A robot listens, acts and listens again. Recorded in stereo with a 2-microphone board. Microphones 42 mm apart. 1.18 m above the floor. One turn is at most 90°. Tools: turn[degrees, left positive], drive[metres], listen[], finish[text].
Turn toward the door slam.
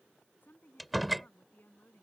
Action: turn[30]
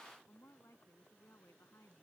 Action: listen[]
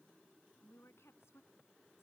Action: finish[I heard a door slam, but can't make it out now. It was about 30° right or 150° left.]